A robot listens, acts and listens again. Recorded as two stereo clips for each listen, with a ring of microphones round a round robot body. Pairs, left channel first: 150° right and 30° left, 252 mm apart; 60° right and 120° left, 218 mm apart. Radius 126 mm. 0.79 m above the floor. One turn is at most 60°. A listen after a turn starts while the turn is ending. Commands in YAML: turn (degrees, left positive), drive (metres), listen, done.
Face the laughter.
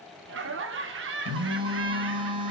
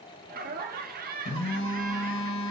turn: 60
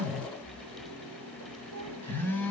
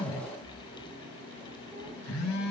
turn: 10
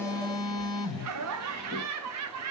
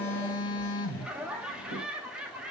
turn: 35
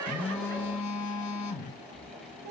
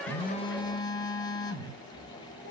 turn: -20
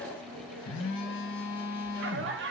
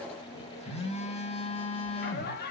turn: -10
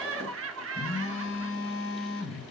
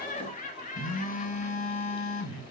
done: "Facing the laughter."